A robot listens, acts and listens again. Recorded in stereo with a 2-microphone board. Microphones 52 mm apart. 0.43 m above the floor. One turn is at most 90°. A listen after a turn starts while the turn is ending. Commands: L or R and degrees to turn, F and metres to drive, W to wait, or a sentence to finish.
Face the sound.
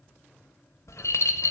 L70
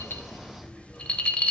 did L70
L25
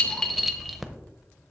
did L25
Facing the rattle.